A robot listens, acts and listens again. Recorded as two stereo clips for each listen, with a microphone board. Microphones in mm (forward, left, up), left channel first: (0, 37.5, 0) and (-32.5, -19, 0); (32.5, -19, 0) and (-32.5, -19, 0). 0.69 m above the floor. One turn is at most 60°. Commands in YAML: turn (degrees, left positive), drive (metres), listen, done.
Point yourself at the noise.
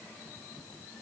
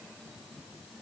listen: true
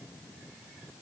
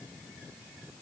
listen: true
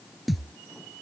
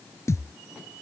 turn: -30
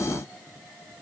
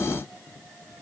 done: "Facing where the thud came from. I can't hear it now."